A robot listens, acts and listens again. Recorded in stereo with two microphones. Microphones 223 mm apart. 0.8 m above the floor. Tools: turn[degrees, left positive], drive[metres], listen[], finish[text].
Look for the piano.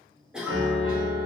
Thought: The piano: about 65° right or 115° right.
Action: turn[-65]
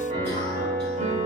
Thought: So it is at 35° right.
Action: turn[-35]
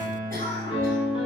Thought: The piano is now 25° left.
Action: turn[25]
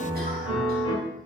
Thought: The piano is now 25° left.
Action: turn[25]
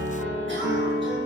Thought: The piano is now 10° right.
Action: turn[-10]
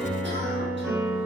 Action: finish[Found it: a piano, straight ahead, under 1 m away.]